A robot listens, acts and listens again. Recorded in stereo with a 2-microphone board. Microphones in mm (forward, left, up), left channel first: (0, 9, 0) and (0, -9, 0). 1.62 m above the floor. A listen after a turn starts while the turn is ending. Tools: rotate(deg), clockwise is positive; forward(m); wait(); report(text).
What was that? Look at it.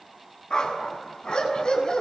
rotate(-55)
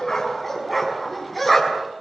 report("Facing the dog barking, over 4 m away.")